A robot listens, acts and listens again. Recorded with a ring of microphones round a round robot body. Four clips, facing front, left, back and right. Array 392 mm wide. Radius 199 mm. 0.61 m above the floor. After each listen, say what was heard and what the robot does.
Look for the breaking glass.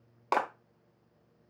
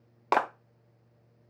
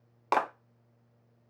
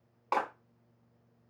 Keep listening.
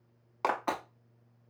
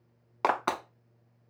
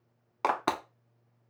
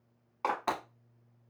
The breaking glass: 160° left. Turn 160° left.
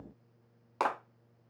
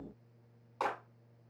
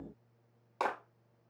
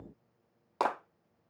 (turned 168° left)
Facing where the breaking glass came from. I can't hear it now.